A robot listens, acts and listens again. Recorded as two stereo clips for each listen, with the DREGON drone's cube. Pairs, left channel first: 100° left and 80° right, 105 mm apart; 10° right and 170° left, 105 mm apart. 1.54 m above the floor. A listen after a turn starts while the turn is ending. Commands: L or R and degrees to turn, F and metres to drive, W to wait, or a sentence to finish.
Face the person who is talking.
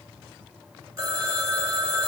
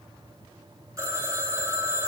W
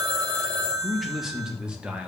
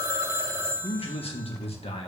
Found it: a man speaking, straight ahead.